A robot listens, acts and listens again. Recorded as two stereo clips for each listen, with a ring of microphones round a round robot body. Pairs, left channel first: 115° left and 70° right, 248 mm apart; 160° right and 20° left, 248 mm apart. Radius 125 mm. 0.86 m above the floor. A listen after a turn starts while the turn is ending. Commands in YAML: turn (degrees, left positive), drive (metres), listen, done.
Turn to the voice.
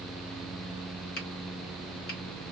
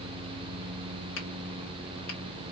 listen: true
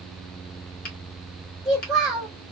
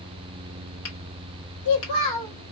turn: -155
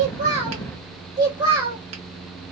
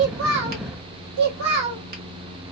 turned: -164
done: "Found it: a child speaking, straight ahead."